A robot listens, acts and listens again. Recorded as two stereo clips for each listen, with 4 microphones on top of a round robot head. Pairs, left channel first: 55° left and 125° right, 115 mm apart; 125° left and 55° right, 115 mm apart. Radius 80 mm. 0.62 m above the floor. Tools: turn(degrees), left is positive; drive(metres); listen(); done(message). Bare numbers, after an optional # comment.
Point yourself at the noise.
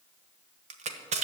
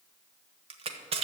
# The crushing: 95° right.
turn(-95)
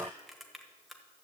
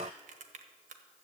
listen()
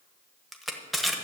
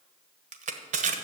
# The crushing is now 35° right.
turn(-35)
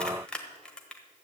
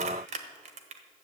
# The crushing is now 25° right.
turn(-25)
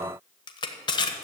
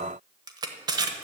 done("Facing the crushing, 1 to 2 m away.")